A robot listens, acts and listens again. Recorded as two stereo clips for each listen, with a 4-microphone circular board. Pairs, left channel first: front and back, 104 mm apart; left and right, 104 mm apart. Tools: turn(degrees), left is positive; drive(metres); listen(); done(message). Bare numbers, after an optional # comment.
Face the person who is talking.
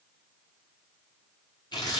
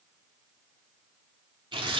listen()
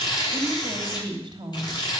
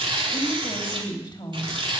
# The woman speaking: 135° left.
turn(135)
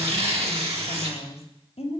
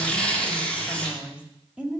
# The woman speaking is now 10° right.
turn(-10)
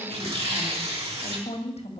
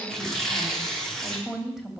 done("Facing the woman speaking.")